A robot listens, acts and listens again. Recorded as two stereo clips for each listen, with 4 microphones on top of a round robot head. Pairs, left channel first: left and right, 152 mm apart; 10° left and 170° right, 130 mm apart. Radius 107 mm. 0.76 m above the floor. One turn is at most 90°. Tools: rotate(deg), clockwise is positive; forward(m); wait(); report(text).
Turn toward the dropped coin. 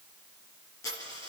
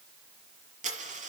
rotate(-90)
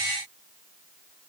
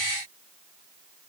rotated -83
rotate(-80)
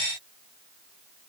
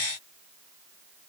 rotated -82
report("I heard a dropped coin from this way, but can't make it out now.")